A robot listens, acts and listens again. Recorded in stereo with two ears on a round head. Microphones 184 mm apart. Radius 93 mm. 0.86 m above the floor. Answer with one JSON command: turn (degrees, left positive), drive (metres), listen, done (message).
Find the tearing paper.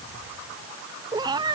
{"listen": true}
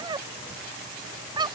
{"listen": true}
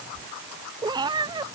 {"done": "I can't make out tearing paper to turn to."}